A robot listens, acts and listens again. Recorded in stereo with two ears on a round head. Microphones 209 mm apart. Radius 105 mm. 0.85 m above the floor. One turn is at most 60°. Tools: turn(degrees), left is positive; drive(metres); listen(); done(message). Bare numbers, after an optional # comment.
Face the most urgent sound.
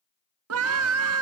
# The scream: about 65° right or 115° right.
turn(-60)
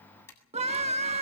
# So it is at 30° right.
turn(-30)
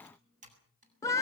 # The scream is now 15° left.
turn(15)
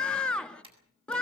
done("Found it: a scream, straight ahead, 1 to 2 m away.")